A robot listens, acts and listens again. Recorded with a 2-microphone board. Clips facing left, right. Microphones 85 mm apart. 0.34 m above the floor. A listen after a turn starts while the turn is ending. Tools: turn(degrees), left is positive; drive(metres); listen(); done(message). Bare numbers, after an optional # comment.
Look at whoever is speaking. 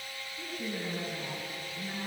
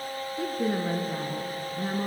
turn(-90)
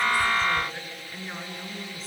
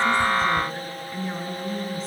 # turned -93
done("Facing the woman speaking, 2 to 4 m away.")